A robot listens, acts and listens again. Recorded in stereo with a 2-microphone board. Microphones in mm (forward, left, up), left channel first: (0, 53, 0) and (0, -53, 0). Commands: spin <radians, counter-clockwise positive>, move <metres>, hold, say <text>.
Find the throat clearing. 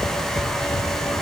hold
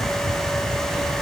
hold
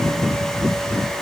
say I can't make out throat clearing.